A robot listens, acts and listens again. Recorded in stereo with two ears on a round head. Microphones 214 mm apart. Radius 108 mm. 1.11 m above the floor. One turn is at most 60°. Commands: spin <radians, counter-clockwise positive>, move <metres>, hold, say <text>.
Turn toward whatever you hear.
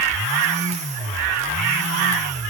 hold
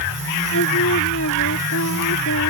spin 0.96
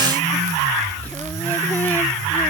hold
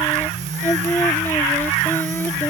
spin 0.17
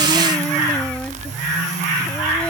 hold
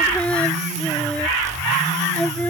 say Found it: singing, straight ahead.